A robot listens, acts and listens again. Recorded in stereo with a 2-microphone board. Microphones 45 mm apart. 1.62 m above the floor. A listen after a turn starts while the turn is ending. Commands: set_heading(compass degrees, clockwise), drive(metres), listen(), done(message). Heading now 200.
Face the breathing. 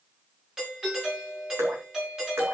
listen()
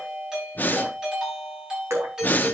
set_heading(160)
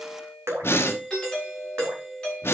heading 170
set_heading(65)
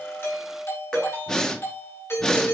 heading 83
set_heading(63)
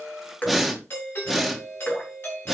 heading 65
done("Facing the breathing, 1 to 2 m away.")